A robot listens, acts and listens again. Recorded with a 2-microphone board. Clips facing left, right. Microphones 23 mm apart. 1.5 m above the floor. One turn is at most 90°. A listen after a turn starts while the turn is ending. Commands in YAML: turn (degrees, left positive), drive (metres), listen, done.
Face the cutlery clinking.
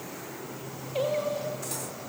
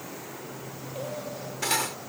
turn: -90
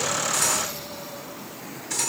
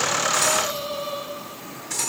done: "Facing the cutlery clinking."